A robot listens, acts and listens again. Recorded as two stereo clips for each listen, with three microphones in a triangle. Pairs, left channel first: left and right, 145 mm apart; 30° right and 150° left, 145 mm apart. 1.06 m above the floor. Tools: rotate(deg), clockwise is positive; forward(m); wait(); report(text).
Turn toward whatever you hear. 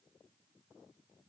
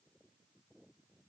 wait()
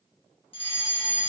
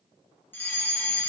rotate(-45)
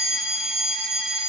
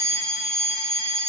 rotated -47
report("Facing the fire alarm, 2 to 4 m away.")